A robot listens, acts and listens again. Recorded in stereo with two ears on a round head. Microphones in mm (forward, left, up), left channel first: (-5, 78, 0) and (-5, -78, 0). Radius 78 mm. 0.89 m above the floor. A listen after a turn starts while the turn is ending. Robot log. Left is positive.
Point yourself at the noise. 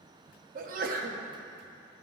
note: The sneeze: about 50° right or 130° right.
cmd yaw -50
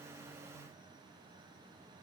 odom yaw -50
cmd idle
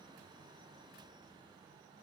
end: I heard a sneeze, but can't make it out now. It was about straight ahead or 80° right.